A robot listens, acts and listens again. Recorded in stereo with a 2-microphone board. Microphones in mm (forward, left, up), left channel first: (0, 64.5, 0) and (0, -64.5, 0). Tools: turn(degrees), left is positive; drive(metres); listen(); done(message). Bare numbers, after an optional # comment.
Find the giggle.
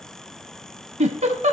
# The giggle: about 60° right or 120° right.
turn(-60)
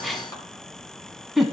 done("Found it: a giggle, straight ahead.")